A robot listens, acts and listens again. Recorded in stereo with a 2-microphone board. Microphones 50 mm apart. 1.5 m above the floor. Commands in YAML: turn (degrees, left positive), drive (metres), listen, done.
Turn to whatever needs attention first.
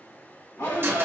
turn: 90
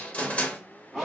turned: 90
done: "Found it: a shout, straight ahead."